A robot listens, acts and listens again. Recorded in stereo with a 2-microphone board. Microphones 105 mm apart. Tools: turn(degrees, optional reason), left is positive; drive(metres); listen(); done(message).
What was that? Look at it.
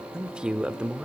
turn(degrees=-30)
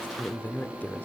turn(degrees=20, reason="So it is at 20° left.")
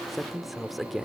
done("Found it: a man speaking, straight ahead, 1 to 2 m away.")